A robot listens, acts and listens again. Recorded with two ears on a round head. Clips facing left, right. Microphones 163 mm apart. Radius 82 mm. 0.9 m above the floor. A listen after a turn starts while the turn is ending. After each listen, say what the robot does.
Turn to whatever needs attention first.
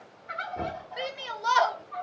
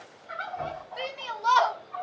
Turn 30° left.
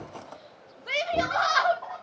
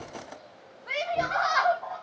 Turn 135° left.
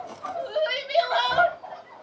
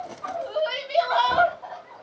Turn 20° left.
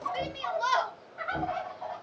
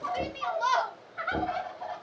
Facing the shout, under 1 m away.